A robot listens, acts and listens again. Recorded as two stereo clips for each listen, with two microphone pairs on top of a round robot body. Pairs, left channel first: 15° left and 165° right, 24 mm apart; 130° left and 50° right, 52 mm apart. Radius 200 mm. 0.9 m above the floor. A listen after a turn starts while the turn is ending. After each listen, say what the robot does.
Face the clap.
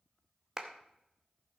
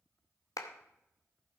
Turn 115° left.
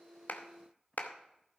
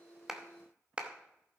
Turn 20° left.
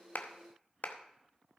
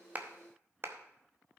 Found it: a clap, straight ahead.